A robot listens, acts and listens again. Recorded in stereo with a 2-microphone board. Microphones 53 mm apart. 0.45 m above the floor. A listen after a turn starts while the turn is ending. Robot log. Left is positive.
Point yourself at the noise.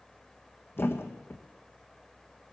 note: The thud: about 45° left or 135° left.
cmd yaw +45
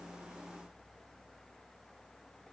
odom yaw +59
cmd idle
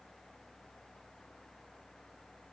end: I heard a thud, but can't make it out now. It was about 15° right or 75° left.